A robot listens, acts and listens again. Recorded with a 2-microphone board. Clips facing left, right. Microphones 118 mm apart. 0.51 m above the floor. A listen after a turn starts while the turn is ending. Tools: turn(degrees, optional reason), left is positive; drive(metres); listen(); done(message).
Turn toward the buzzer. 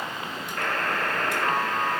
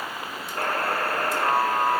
turn(degrees=-30, reason="The buzzer: about 30° right or 150° right.")
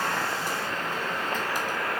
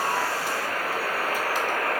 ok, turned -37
turn(degrees=-110, reason="So it is at 110° right.")
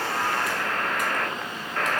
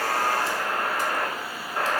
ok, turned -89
turn(degrees=-20, reason="The buzzer is now 20° right.")
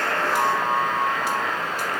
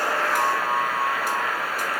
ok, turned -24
done("Found it: a buzzer, straight ahead.")